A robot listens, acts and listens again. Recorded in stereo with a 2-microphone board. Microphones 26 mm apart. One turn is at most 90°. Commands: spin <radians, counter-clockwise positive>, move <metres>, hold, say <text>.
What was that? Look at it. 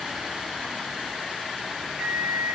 spin -0.70
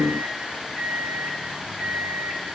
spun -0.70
say Found it: a microwave, straight ahead, 2 to 4 m away.